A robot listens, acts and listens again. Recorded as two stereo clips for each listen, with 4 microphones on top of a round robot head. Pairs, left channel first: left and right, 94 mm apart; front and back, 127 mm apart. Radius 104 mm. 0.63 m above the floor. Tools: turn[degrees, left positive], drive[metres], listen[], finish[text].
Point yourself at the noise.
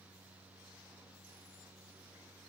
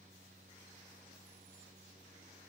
Action: listen[]
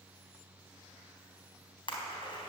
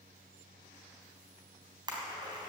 Thought: The splash: 125° left.
Action: turn[125]
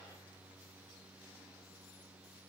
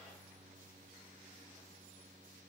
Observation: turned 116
Action: finish[I heard a splash from this way, but can't make it out now.]